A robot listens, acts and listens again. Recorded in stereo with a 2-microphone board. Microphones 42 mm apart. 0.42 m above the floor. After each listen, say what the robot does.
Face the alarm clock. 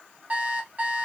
Turn 30° right.
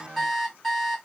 Facing the alarm clock.